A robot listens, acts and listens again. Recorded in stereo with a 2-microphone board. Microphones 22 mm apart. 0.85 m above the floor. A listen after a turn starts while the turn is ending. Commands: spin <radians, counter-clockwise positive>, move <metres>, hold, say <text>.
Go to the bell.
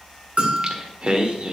spin -1.57
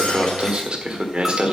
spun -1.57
hold
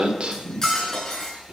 hold
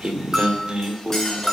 move 1.0
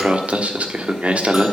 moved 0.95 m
hold
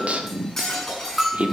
move 1.0
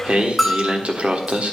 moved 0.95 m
move 1.0
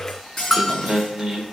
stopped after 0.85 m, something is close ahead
say Arrived at the bell, straight ahead.